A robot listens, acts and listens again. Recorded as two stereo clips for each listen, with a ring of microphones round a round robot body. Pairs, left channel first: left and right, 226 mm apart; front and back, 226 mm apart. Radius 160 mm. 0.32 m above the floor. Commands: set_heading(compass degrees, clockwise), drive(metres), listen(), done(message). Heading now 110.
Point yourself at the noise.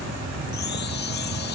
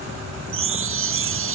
set_heading(320)
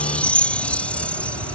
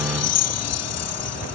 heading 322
done("Found it: a chime, straight ahead.")